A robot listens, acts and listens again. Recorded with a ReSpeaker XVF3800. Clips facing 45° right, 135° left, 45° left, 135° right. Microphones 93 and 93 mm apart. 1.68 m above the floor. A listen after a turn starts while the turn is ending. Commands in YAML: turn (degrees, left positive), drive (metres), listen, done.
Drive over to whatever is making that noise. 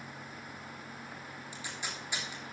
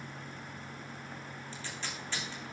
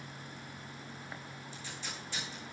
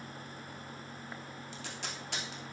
turn: -120
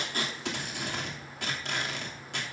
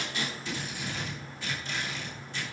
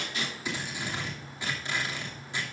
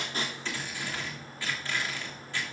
turn: -25
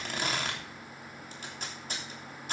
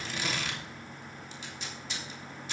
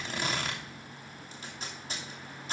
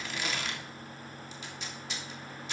drive: 1.0
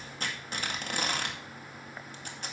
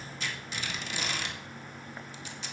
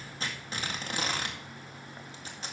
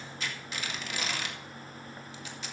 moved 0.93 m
drive: 1.0
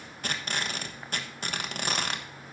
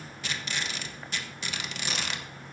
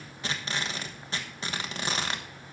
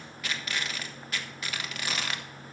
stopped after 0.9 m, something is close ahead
turn: -10
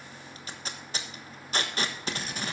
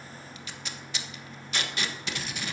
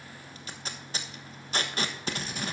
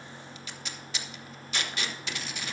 done: "Arrived at the tape being pulled, straight ahead."